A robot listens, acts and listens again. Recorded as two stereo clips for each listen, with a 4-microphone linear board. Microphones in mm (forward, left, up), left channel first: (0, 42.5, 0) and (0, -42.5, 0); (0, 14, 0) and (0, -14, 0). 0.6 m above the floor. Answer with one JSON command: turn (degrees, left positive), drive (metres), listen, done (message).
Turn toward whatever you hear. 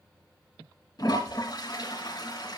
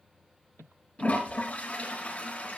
{"turn": 50}
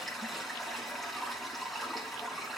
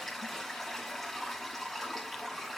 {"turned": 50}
{"done": "Found it: a toilet flushing, straight ahead, 2 to 4 m away."}